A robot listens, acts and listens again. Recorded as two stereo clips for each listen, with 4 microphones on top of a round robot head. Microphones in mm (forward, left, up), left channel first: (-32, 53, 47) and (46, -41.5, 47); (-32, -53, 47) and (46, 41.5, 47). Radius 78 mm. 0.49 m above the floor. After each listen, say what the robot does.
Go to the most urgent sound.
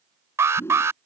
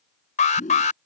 Turn 120° right.
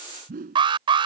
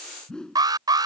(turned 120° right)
Drive 1.0 m forward.
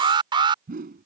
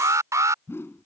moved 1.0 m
Turn 10° right.
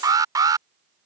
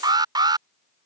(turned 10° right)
Drive 1.0 m forward.
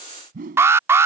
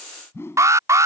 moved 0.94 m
Drive 1.0 m forward.
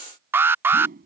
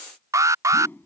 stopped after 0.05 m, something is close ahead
I am next to the alarm.